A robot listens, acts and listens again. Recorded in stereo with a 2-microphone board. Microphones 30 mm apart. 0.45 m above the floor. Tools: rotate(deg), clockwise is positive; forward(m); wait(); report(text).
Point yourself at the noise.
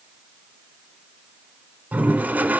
rotate(70)
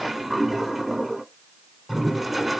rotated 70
report("Found it: a toilet flushing, straight ahead.")